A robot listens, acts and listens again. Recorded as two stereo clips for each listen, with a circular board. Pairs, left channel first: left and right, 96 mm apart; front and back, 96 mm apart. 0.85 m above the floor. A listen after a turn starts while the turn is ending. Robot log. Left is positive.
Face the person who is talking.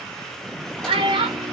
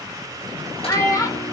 note: The child speaking: 55° right.
cmd yaw -55
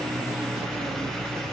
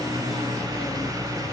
cmd idle
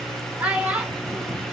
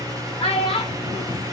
note: The child speaking is now 15° right.
cmd yaw -15
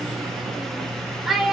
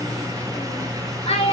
end: Found it: a child speaking, straight ahead.